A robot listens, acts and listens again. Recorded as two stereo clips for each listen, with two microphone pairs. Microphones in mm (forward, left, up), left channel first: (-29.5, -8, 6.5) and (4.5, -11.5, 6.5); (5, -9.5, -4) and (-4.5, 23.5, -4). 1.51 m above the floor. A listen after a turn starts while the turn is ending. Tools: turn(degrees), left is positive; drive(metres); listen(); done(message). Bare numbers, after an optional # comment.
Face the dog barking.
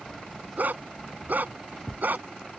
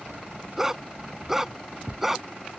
# The dog barking: 25° left.
turn(25)
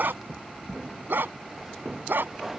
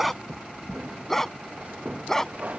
done("Facing the dog barking.")